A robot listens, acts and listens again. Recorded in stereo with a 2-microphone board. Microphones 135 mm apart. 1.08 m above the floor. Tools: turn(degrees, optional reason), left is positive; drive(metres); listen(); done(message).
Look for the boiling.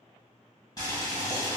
turn(degrees=35, reason="The boiling: about 35° left or 145° left.")
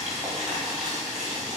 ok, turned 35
done("Facing the boiling, 1 to 2 m away.")